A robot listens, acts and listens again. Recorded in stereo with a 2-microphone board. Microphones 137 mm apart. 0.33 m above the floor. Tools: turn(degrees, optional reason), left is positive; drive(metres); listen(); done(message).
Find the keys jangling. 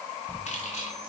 turn(degrees=55, reason="The keys jangling: about 55° left or 125° left.")
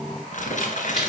listen()
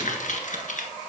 listen()
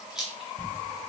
done("Facing the keys jangling.")